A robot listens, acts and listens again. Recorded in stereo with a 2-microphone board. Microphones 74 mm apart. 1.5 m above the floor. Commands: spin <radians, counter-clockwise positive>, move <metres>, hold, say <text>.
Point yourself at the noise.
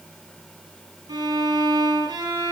spin -1.22
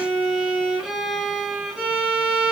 say Facing the violin, over 4 m away.